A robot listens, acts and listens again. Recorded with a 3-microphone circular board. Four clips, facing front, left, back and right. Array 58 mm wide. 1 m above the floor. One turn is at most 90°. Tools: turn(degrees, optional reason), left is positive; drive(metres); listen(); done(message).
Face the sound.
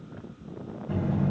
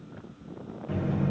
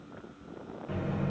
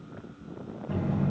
turn(degrees=90, reason="The buzzer: 140° left.")
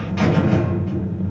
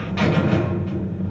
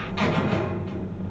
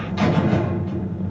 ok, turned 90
turn(degrees=70, reason="The buzzer is now 70° left.")
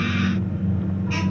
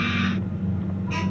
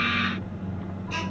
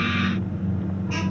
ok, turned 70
done("Facing the buzzer.")